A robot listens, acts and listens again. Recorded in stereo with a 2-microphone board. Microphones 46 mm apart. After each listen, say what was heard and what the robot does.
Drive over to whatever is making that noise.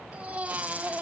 The baby crying: about 30° right or 150° right. Turn 30° right.
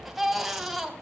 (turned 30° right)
Drive 1.0 m forward.
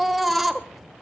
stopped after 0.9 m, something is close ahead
Arrived at the baby crying, straight ahead.